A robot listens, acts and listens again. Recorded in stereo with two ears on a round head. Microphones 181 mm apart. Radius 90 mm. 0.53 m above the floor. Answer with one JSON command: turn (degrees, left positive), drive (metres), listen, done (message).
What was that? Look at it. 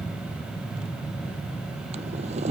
{"turn": -35}
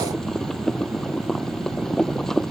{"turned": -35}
{"done": "Found it: boiling, straight ahead."}